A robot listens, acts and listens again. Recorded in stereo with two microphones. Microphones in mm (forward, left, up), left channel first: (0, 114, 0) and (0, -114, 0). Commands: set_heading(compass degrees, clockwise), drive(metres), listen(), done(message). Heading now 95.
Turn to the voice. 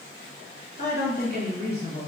set_heading(50)
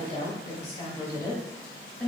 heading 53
done("Found it: a woman speaking, straight ahead.")